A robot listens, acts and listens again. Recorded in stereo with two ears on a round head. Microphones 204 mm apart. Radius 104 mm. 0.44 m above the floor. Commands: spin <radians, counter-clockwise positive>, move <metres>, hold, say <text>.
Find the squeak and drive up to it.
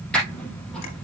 spin 0.52
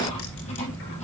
spin 2.62
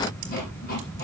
hold
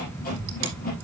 spin 0.70
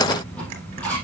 move 1.0
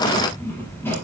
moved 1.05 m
spin 0.17
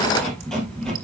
move 1.0
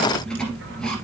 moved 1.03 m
move 1.0
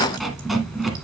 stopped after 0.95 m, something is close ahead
say I am next to the squeak.